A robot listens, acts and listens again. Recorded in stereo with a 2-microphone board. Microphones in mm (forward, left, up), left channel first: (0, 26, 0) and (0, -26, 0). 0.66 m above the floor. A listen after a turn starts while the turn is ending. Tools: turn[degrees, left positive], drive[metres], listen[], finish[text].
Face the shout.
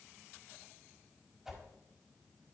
Action: listen[]
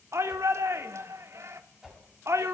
Thought: The shout: about 60° right or 120° right.
Action: turn[-60]
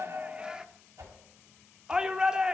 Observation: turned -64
Thought: So it is at 15° right.
Action: turn[-15]
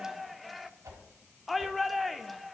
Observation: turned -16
Action: finish[Facing the shout, 1 to 2 m away.]